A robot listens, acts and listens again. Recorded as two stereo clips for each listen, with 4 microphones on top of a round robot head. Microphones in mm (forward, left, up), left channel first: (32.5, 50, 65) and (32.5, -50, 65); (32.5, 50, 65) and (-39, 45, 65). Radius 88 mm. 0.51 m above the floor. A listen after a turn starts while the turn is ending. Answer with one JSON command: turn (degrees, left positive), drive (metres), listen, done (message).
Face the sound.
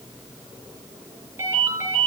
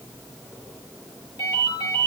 {"turn": -30}
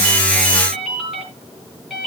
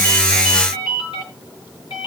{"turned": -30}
{"done": "Facing the ringtone."}